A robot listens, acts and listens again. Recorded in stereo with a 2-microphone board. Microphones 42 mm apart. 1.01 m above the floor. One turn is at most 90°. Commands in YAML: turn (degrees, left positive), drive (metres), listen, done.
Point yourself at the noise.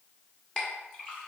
turn: 20
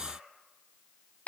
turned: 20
turn: 90
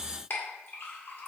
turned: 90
turn: 60
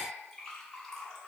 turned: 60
turn: 15
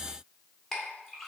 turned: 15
done: "Facing the clink."